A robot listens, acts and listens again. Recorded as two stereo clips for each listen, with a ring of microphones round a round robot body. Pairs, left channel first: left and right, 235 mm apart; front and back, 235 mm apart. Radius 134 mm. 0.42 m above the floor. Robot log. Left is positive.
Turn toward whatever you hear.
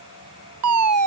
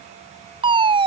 note: The fire alarm: 110° right.
cmd yaw -110
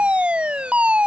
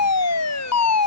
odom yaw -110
end: Found it: a fire alarm, straight ahead.